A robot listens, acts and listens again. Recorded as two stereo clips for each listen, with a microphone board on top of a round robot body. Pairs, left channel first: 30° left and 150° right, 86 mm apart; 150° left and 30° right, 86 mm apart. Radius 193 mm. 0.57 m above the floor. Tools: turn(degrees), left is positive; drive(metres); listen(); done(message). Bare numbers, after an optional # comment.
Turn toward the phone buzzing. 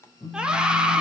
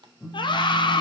# The phone buzzing: 65° left.
turn(65)
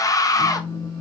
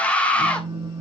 # The phone buzzing is now 10° left.
turn(10)
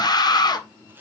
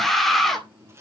listen()
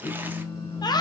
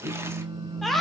done("Found it: a phone buzzing, straight ahead.")